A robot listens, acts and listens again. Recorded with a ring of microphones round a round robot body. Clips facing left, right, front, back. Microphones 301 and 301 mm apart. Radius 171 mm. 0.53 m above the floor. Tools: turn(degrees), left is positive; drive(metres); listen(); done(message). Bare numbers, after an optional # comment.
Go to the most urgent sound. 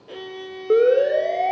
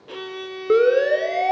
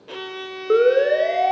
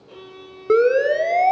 # The siren: 150° right.
turn(-150)
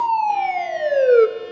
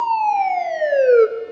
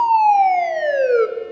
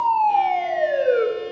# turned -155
drive(1.0)
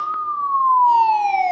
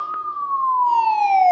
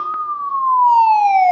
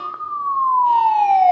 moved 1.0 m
# The siren is now 15° left.
turn(15)
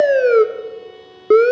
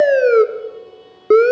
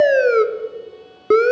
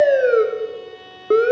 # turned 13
drive(1.0)
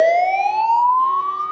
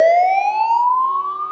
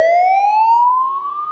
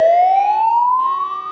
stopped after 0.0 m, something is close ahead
done("Arrived at the siren, straight ahead.")